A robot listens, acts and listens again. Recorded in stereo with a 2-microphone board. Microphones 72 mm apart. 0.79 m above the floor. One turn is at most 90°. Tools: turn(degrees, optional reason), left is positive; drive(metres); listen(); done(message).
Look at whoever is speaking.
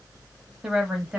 turn(degrees=-30)
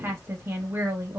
turn(degrees=-90, reason="So it is at 140° right.")
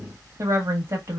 turn(degrees=-50, reason="The woman speaking is now 50° right.")
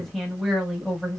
done("Found it: a woman speaking, straight ahead, 1 to 2 m away.")